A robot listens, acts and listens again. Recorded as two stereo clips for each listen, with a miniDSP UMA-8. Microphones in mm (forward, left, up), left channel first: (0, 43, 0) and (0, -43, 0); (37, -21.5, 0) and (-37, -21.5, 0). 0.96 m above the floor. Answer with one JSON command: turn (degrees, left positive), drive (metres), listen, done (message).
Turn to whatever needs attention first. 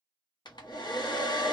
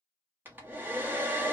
{"listen": true}
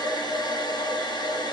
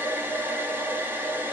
{"listen": true}
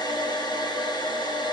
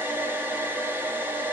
{"done": "I can't make out anything urgent to turn to."}